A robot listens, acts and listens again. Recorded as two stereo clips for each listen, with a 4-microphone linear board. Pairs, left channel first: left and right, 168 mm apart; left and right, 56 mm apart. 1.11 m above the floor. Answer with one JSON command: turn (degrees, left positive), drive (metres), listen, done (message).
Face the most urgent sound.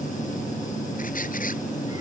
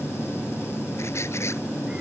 {"listen": true}
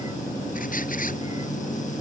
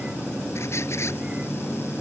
{"listen": true}
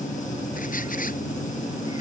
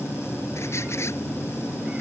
{"done": "I can't make out anything urgent."}